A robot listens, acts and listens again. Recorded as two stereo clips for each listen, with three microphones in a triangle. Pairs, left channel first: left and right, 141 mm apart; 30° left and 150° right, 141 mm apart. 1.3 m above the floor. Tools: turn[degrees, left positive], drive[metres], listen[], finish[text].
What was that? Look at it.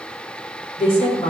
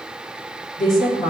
Thought: The woman speaking: 40° left.
Action: turn[40]
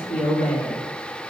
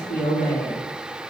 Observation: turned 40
Action: finish[Facing the woman speaking, 2 to 4 m away.]